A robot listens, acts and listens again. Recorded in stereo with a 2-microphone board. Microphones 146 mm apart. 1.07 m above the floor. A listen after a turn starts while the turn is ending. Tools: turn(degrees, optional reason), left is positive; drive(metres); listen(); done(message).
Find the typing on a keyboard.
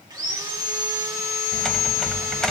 turn(degrees=30)
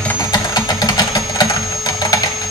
turn(degrees=145, reason="So it is at 145° left.")
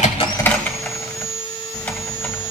turn(degrees=10, reason="The typing on a keyboard is now 10° left.")
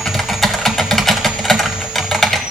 done("Facing the typing on a keyboard, 1 to 2 m away.")